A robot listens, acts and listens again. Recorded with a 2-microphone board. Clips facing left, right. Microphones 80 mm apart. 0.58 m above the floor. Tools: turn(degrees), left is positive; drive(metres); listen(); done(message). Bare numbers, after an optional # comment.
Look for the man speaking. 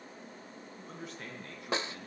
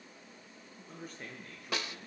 # The man speaking: about 70° left or 110° left.
turn(70)
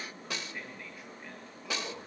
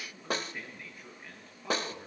done("Found it: a man speaking, straight ahead, over 4 m away.")